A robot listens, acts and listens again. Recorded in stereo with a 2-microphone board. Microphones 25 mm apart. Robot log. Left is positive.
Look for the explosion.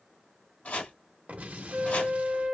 note: The explosion: about 65° right or 115° right.
cmd yaw -65
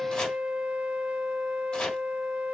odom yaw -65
cmd idle
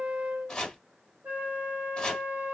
end: I heard an explosion, but can't make it out now. It was about straight ahead or 50° right.